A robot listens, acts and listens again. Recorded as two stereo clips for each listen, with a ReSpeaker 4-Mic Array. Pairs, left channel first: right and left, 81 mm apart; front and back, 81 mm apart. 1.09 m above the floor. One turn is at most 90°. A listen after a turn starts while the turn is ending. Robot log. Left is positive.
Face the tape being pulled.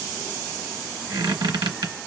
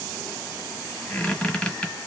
cmd idle
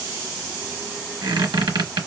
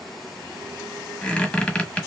cmd idle
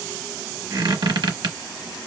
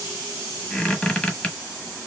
end: I can't make out tape being pulled to turn to.